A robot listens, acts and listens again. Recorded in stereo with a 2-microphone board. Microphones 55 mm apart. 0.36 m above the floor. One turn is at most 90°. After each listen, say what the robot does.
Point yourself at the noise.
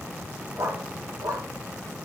Turn 90° right.
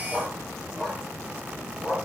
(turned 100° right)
Turn 10° left.
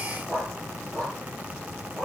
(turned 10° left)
Turn 10° left.
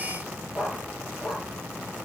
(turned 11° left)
Facing the dog barking, over 4 m away.